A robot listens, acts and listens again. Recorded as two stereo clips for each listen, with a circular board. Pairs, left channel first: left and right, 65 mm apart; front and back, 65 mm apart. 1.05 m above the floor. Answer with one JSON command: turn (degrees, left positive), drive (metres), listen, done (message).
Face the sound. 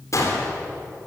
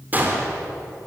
{"turn": 120}
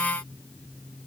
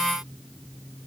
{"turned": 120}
{"done": "Facing where the gunshot came from. I can't hear it now."}